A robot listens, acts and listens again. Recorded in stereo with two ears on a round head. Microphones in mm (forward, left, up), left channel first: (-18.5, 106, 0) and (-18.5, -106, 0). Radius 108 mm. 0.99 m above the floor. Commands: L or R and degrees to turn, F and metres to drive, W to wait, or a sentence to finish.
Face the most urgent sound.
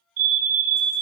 R65
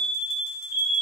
R40
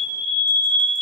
Facing the fire alarm, 2 to 4 m away.